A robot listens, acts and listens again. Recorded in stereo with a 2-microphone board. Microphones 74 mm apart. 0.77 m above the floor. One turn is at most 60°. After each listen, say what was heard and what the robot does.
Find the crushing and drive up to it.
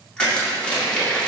Turn 30° left.
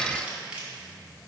So it is at 15° right. Turn 15° right.
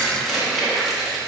Drive 1.0 m forward.
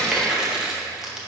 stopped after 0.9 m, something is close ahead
The crushing is now 10° right. Turn 10° right.
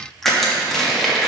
I am next to the crushing.